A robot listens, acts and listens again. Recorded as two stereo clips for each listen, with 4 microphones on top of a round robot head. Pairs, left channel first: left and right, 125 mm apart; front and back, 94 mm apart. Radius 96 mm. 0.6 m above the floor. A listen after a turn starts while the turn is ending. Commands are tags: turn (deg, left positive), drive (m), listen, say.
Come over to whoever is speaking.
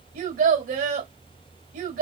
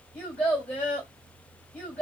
<turn deg="-80"/>
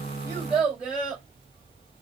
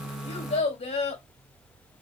<drive m="1.0"/>
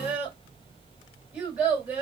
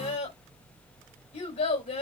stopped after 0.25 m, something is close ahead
<say>Something is in my way. I am facing the child speaking but have not reached it.</say>